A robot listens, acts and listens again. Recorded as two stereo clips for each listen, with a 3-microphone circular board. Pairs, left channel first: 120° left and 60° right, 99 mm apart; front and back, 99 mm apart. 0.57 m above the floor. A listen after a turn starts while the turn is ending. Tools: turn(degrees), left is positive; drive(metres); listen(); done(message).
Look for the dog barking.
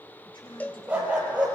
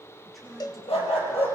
turn(degrees=15)
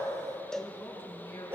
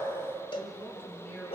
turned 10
done("Found it: a dog barking, straight ahead.")